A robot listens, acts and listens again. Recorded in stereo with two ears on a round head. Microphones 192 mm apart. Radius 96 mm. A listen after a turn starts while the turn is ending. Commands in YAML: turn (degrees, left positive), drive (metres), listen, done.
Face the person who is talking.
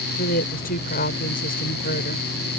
turn: 45
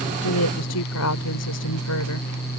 turn: 90
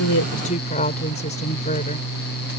turn: 35
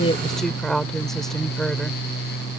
done: "Facing the woman speaking."